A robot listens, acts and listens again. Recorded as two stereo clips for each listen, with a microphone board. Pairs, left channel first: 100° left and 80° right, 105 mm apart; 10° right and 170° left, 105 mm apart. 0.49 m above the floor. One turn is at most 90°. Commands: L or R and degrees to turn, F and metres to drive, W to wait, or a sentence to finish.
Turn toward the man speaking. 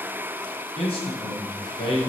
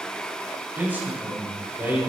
L90
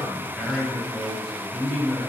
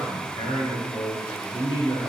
L10
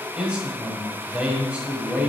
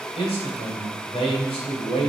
Found it: a man speaking, straight ahead.